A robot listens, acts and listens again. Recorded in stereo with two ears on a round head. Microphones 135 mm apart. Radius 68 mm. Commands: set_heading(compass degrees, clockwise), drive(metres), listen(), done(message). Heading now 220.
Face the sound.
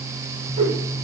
set_heading(265)
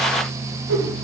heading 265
set_heading(355)
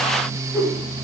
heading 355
done("Facing the whoosh.")